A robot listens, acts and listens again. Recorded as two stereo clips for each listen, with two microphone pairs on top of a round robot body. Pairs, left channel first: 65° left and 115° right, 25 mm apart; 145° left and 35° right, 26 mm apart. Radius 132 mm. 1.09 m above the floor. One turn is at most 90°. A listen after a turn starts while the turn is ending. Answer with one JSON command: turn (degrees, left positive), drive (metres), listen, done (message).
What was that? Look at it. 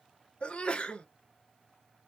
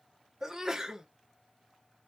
{"turn": 30}
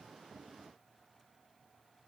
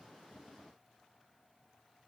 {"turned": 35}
{"done": "Facing where the sneeze came from. I can't hear it now."}